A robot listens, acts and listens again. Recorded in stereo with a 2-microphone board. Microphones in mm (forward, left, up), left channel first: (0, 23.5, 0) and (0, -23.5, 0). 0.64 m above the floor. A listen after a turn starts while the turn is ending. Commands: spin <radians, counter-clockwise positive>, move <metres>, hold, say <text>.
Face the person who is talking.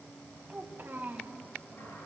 spin -0.87
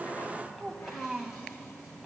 say Facing the child speaking, 2 to 4 m away.